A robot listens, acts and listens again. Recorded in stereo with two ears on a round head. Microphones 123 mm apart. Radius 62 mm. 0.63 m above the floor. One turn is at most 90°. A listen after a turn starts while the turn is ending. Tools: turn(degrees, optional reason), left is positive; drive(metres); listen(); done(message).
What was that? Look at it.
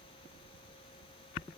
listen()
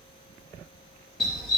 turn(degrees=30)
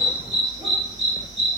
turn(degrees=-25, reason="So it is at 25° right.")
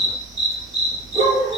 turn(degrees=-25, reason="The dog barking is now 25° right.")
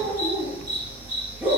turn(degrees=-15, reason="The dog barking is now 15° right.")
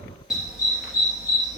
done("Found it: a dog barking, straight ahead, 2 to 4 m away.")